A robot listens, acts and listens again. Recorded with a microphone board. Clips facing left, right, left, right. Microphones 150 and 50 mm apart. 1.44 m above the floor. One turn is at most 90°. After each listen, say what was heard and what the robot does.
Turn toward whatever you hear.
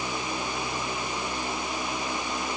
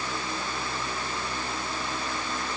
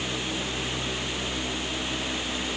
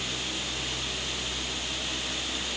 Keep listening.
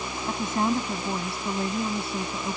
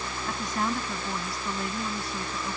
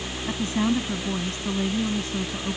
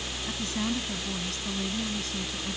The woman speaking: about 30° left or 150° left. Turn 30° left.
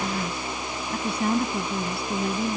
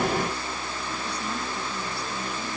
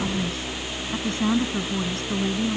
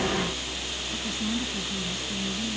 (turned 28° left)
So it is at 120° left. Turn 90° left.
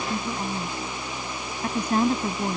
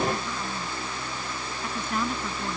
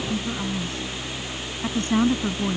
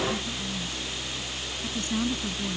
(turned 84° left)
The woman speaking is now 40° left. Turn 40° left.
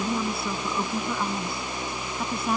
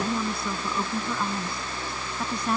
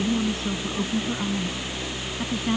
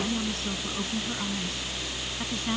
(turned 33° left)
Found it: a woman speaking, straight ahead.